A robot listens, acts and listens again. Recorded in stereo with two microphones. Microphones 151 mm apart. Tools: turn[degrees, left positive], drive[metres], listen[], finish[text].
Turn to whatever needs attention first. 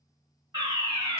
Thought: The fire alarm: about 25° right or 155° right.
Action: turn[-25]
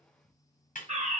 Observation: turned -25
Thought: So it is at 120° right.
Action: turn[-120]
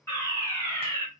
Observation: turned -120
Thought: The fire alarm is now 20° left.
Action: turn[20]
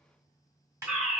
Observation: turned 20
Action: finish[Facing the fire alarm, 1 to 2 m away.]